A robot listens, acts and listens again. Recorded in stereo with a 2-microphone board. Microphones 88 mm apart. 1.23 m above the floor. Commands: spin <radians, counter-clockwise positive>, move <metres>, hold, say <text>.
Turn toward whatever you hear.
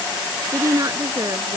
spin -0.70
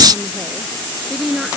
say Found it: a woman speaking, straight ahead.